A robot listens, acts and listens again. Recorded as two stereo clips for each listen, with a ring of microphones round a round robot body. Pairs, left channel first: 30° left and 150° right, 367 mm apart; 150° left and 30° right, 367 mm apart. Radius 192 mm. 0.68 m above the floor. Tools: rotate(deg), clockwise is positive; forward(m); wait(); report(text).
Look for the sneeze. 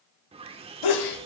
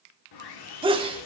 rotate(-45)
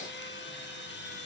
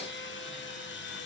report("Facing where the sneeze came from. I can't hear it now.")